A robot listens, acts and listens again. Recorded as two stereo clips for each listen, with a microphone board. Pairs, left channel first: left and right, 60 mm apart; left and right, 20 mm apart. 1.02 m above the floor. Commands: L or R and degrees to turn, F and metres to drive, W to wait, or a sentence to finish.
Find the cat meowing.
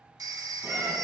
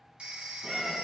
R35
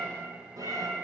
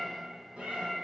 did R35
R105
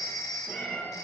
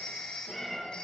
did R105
L25
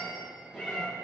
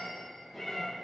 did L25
R10
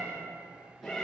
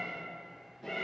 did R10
Found it: a cat meowing, straight ahead.